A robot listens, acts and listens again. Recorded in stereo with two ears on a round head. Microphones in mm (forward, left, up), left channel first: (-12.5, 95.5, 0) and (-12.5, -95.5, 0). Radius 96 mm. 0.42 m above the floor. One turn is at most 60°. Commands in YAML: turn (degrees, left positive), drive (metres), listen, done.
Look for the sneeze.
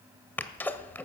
turn: 30
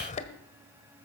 turn: 60
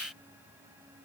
turn: 60
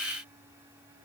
turn: 20
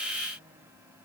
done: "I heard a sneeze from this way, but can't make it out now."